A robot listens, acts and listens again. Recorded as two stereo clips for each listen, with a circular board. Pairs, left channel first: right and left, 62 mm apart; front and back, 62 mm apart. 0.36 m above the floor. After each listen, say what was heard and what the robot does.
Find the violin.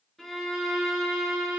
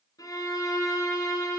Facing the violin, 2 to 4 m away.